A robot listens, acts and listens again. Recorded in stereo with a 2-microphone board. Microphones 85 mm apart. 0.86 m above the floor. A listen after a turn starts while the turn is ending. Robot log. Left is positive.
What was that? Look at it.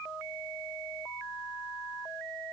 cmd idle
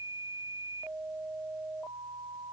cmd idle
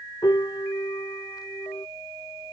note: The piano: about 50° left or 130° left.
cmd yaw +50
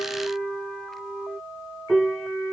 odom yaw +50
end: Facing the piano.